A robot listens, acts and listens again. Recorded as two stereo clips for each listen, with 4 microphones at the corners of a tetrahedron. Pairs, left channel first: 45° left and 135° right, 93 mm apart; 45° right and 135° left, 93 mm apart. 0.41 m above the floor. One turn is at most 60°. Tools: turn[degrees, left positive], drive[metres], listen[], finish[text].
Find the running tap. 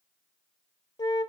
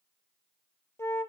Action: listen[]
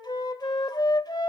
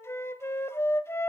Action: listen[]
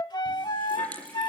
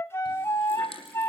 Thought: The running tap: 30° right.
Action: turn[-30]
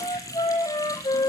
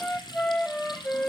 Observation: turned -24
Thought: The running tap is now 10° right.
Action: turn[-10]
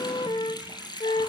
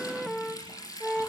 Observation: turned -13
Action: finish[Facing the running tap, over 4 m away.]